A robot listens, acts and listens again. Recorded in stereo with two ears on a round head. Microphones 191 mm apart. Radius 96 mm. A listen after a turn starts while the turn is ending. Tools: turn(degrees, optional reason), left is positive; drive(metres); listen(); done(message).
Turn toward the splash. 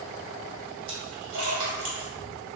turn(degrees=-60, reason="The splash: about 60° right or 120° right.")
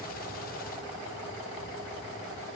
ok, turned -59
listen()
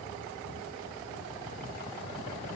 done("I heard a splash, but can't make it out now. It was about 5° right or 60° right.")